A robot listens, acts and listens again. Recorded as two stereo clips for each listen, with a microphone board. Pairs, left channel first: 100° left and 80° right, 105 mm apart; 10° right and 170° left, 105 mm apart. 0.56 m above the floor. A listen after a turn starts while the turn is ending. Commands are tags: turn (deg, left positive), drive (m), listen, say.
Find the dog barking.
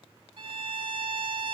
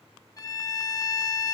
<listen/>
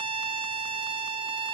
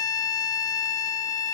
<listen/>
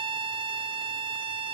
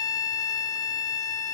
<say>I can't make out a dog barking to turn to.</say>